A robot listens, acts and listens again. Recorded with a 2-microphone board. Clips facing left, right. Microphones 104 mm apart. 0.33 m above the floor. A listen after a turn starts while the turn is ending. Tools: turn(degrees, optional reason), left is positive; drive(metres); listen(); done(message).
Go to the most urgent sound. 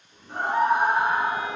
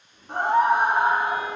turn(degrees=-65, reason="The scream: about 65° right or 115° right.")
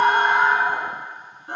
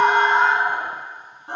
turn(degrees=-35, reason="So it is at 35° right.")
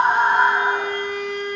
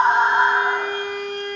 turn(degrees=-10, reason="The scream is now 10° right.")
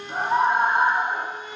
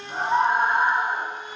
drive(metres=1.0)
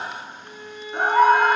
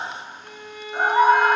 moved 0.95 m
turn(degrees=-10, reason="The scream is now 10° right.")
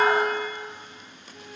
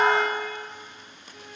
listen()
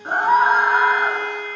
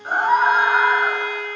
drive(metres=1.0)
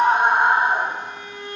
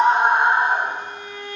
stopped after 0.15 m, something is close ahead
done("Arrived at the scream, straight ahead.")